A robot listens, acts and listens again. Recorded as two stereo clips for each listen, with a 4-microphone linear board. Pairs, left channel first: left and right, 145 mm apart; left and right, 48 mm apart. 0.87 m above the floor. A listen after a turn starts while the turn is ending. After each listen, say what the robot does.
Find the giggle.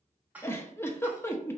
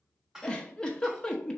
Turn 15° left.
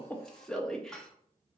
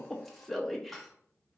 Facing the giggle, under 1 m away.